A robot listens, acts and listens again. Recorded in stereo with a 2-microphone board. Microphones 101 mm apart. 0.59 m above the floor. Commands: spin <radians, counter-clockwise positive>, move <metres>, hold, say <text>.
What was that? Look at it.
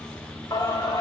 spin 0.70
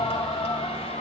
spin 1.83
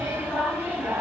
spin -0.35
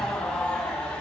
say Found it: singing, straight ahead.